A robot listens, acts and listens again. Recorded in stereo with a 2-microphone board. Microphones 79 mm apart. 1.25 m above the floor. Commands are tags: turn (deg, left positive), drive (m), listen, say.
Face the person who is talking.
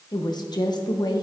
<turn deg="60"/>
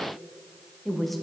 <say>Facing the woman speaking, under 1 m away.</say>